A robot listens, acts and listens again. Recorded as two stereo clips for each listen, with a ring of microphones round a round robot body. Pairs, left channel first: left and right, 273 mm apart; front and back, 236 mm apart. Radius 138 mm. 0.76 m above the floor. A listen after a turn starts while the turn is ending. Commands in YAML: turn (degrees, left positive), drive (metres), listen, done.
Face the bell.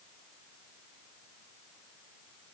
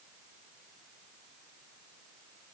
listen: true
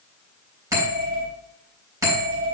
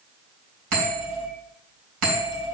turn: -170
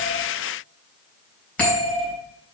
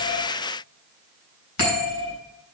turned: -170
done: "Facing the bell."